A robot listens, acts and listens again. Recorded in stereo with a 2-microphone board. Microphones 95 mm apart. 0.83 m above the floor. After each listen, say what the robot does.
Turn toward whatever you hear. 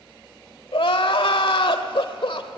Turn 65° left.
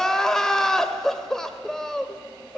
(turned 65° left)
Found it: crying, straight ahead.